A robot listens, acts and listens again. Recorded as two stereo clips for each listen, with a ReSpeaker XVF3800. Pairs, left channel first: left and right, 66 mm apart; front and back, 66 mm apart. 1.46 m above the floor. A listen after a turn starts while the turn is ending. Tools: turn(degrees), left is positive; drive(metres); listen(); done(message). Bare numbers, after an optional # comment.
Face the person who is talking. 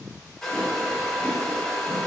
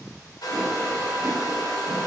listen()
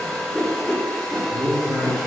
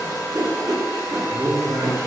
# The man speaking: 150° right.
turn(-150)
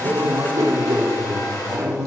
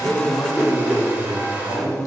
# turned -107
# The man speaking is now 45° right.
turn(-45)
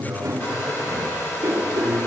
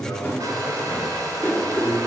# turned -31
# The man speaking is now 15° right.
turn(-15)
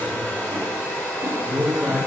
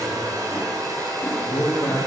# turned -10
done("Found it: a man speaking, straight ahead, under 1 m away.")